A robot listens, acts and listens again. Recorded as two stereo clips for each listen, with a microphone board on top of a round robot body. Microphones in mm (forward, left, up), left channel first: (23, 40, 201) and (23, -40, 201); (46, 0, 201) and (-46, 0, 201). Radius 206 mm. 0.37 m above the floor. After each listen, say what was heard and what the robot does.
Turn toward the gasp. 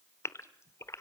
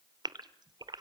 The gasp: 140° left. Turn 140° left.
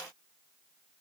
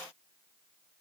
Facing where the gasp came from. I can't hear it now.